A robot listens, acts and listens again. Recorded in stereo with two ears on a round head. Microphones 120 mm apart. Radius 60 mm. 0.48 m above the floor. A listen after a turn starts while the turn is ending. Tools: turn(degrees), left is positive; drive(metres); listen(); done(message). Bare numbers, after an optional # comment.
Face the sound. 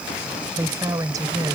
# The woman speaking: about 35° right or 145° right.
turn(-35)
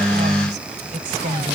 # So it is at 110° right.
turn(-110)
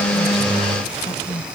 # The woman speaking is now 30° left.
turn(30)
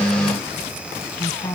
# The woman speaking is now 25° left.
turn(25)
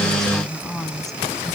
done("Found it: a woman speaking, straight ahead.")